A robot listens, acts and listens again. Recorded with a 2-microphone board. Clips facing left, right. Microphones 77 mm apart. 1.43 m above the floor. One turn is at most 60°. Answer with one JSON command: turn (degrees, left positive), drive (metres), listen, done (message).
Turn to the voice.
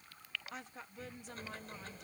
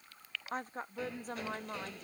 {"turn": -40}
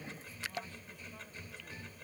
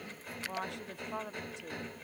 {"turn": -60}
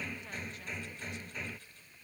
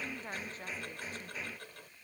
{"turn": -40}
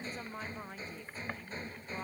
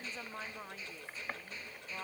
{"done": "Found it: a woman speaking, straight ahead."}